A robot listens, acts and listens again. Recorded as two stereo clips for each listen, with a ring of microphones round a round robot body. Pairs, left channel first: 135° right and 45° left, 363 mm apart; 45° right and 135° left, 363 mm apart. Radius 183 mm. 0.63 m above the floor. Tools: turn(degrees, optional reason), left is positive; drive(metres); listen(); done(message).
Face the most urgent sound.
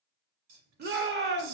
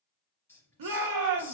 turn(degrees=105, reason="The shout: 105° left.")
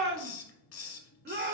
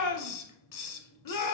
turn(degrees=-15, reason="The shout is now 15° right.")
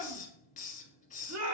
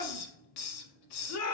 done("Found it: a shout, straight ahead, 1 to 2 m away.")